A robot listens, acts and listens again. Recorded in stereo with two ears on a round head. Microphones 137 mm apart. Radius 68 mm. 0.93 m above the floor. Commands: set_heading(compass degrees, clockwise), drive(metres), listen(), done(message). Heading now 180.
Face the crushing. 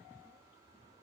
listen()
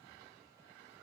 listen()
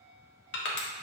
set_heading(90)
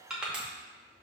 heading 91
done("Facing the crushing.")